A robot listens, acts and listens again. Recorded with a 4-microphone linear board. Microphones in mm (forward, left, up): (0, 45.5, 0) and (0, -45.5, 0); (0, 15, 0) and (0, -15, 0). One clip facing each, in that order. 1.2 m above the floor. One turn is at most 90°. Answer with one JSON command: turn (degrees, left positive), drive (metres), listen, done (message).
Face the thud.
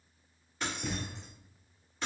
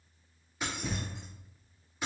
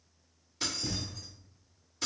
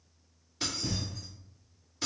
{"turn": -30}
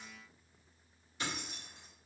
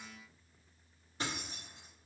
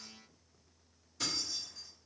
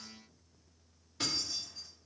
{"listen": true}
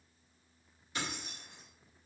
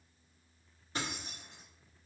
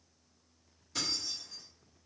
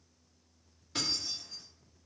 {"done": "I heard a thud, but can't make it out now. It was about 25° left or 145° right."}